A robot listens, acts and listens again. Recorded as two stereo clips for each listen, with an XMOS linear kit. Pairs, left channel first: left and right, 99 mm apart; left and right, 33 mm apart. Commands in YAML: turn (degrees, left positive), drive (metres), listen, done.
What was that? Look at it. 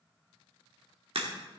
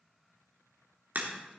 turn: -75
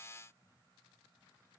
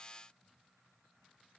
listen: true
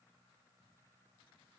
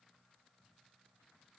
done: "I heard a crack, but can't make it out now. It was about straight ahead or 30° right."